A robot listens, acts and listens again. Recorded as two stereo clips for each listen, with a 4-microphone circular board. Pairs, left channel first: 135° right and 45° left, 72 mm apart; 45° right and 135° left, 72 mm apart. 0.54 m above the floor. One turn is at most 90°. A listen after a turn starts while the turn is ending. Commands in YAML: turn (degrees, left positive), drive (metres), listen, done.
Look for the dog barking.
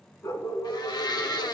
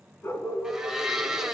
turn: -90
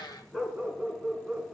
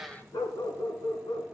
turn: -35
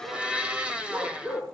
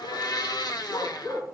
turn: -15
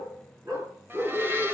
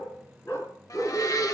done: "Found it: a dog barking, straight ahead."